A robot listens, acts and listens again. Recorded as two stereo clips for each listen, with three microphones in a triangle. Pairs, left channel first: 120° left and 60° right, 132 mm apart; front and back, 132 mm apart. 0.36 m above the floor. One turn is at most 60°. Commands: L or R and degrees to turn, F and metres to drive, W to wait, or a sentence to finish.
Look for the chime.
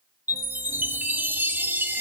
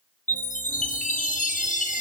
L15
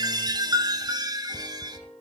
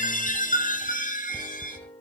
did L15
Facing the chime, 2 to 4 m away.